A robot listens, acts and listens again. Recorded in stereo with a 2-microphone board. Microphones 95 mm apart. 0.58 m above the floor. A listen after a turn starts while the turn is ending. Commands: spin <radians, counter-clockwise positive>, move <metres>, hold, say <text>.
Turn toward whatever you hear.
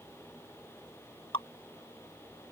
spin 1.22
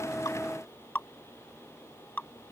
spin 0.35
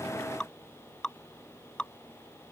spin 0.17
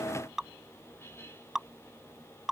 say Found it: dripping, straight ahead.